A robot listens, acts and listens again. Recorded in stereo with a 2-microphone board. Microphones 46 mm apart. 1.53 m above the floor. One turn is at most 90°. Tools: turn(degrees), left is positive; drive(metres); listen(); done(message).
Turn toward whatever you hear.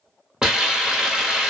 turn(degrees=-30)
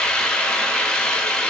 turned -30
turn(degrees=15)
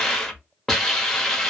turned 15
done("Found it: a hiss, straight ahead, under 1 m away.")